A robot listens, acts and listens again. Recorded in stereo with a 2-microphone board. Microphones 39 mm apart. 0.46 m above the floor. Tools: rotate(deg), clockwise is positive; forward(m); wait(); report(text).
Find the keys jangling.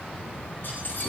rotate(-55)
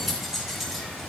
report("Found it: keys jangling, straight ahead.")